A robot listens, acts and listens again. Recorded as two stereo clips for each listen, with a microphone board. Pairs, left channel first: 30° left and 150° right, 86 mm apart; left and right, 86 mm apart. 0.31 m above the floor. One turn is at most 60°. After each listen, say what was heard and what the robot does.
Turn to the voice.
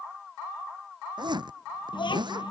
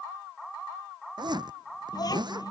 The child speaking: 50° left. Turn 50° left.
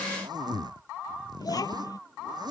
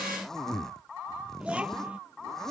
The child speaking is now 15° right. Turn 15° right.
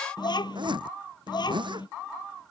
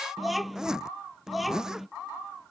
Found it: a child speaking, straight ahead.